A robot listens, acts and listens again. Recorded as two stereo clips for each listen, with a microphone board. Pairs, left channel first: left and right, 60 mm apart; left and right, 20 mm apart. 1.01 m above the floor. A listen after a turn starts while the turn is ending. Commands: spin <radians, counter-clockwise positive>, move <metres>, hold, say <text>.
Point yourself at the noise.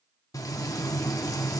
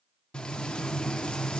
spin 1.22
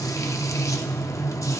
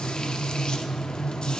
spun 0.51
spin 1.13
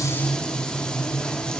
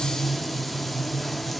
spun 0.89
spin 0.26
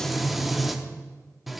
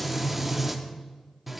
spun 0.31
say Facing the frying, under 1 m away.